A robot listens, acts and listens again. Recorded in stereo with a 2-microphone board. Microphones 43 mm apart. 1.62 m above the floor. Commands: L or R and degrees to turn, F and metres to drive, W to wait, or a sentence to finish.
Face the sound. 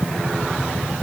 W
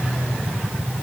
W
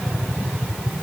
I can't make out anything to turn to.